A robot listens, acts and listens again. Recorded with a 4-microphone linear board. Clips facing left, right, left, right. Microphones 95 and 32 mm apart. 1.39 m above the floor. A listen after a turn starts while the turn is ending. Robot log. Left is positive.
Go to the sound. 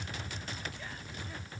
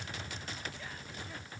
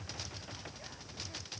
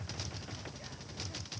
cmd idle
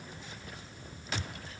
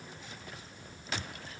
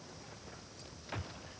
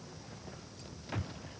cmd idle
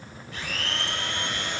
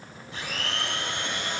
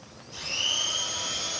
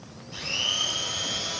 note: The blender: about 20° right or 160° right.
cmd yaw -20
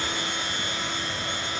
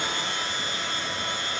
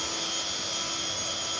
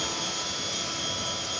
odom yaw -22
cmd fwd 1.0
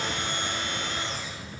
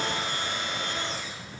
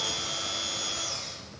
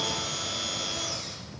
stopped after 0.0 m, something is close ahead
end: Blocked. The blender is further on, straight ahead.